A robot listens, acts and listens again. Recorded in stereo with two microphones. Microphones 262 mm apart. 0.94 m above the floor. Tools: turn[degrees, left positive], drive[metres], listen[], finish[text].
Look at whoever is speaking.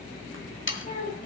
Thought: The child speaking: about 35° left or 145° left.
Action: turn[35]
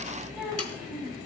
Action: finish[Facing the child speaking.]